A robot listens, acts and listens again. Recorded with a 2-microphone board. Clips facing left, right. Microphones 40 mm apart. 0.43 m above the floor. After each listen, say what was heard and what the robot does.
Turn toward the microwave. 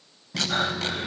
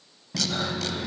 The microwave: about 15° right or 165° right. Turn 15° right.
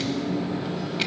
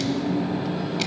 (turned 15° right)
So it is at 150° right. Turn 150° right.
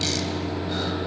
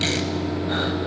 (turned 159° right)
The microwave is now 10° left. Turn 10° left.
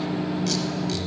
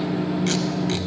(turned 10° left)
Facing the microwave, 1 to 2 m away.